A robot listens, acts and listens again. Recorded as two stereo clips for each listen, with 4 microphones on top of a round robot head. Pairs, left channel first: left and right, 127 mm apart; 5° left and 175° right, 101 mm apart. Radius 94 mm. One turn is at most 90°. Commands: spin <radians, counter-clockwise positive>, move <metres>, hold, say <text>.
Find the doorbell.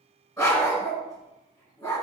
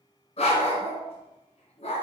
hold
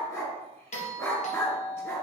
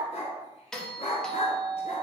spin 1.57
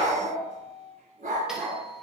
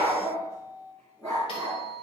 say Facing the doorbell, 1 to 2 m away.